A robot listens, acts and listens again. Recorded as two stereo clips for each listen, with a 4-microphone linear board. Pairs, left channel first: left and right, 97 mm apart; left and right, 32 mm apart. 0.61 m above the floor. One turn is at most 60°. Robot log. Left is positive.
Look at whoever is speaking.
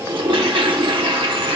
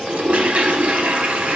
cmd idle
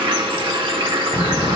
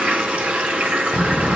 note: The child speaking: about 55° left or 125° left.
cmd yaw +55
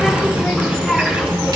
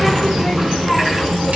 end: Found it: a child speaking, straight ahead, under 1 m away.